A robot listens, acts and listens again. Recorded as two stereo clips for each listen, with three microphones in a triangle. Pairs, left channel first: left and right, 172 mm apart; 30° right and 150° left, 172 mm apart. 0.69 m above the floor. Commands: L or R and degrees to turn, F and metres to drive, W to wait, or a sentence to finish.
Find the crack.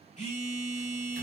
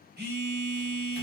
W
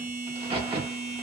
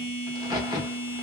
R145
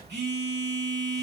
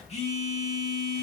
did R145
I heard a crack from this way, but can't make it out now.